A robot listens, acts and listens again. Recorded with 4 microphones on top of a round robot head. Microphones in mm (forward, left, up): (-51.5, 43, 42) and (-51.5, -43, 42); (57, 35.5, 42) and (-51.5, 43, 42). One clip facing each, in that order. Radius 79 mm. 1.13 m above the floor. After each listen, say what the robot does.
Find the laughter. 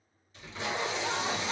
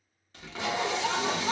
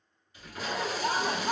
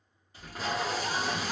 Turn 55° right.
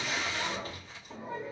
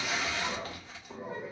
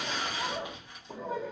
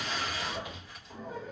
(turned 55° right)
Turn 10° right.
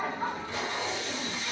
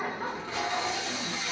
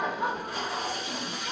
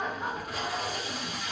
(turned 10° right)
Facing the laughter.